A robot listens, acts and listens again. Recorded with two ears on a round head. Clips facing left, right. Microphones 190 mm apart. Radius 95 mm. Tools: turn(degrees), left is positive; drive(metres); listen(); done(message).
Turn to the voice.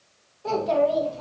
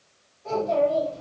turn(degrees=65)
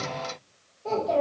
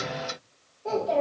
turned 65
done("Facing the child speaking, 1 to 2 m away.")